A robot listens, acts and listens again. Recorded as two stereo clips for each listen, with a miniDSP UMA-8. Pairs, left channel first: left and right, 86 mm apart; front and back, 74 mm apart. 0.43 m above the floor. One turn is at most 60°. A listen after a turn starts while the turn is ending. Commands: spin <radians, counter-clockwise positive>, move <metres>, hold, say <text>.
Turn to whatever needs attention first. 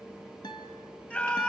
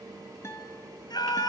spin 0.35
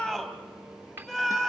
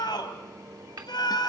say Facing the scream, 2 to 4 m away.